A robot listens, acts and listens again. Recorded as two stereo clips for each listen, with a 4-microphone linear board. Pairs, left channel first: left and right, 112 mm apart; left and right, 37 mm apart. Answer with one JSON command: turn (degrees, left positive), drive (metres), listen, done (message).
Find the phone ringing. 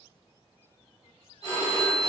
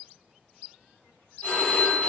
{"turn": 35}
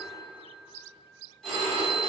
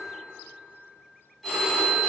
{"done": "Found it: a phone ringing, straight ahead."}